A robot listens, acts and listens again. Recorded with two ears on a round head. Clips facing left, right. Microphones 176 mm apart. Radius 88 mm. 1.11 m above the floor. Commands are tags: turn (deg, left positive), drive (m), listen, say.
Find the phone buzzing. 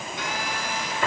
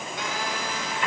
<turn deg="-90"/>
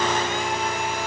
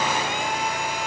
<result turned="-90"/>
<turn deg="-10"/>
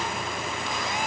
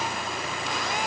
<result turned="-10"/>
<say>Facing the phone buzzing, over 4 m away.</say>